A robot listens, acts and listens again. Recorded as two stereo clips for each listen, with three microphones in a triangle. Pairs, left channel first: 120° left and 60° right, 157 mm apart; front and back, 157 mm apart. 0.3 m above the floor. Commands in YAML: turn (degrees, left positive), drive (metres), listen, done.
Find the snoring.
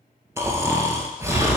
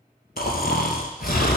turn: 15
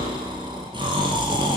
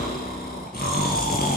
done: "Found it: snoring, straight ahead."